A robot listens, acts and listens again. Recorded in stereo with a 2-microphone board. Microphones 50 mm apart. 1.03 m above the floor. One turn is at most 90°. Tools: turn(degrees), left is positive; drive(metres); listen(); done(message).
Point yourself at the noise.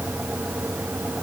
listen()
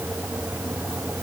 listen()
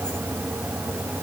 done("I can't make out anything.")